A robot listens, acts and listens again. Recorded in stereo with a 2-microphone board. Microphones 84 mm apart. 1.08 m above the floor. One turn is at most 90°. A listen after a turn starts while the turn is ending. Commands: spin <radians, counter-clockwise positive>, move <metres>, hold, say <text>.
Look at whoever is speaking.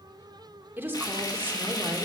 spin -0.44
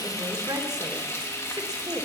spin -1.57
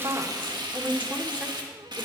spin -0.35
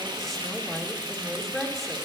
say Facing the woman speaking, 2 to 4 m away.